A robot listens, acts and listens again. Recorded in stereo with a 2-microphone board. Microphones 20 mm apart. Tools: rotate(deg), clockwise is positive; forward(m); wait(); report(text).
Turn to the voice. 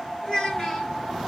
rotate(-30)
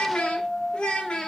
rotate(-120)
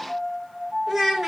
rotate(15)
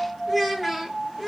rotate(10)
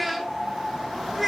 rotate(10)
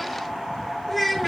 report("Found it: a child speaking, straight ahead, 1 to 2 m away.")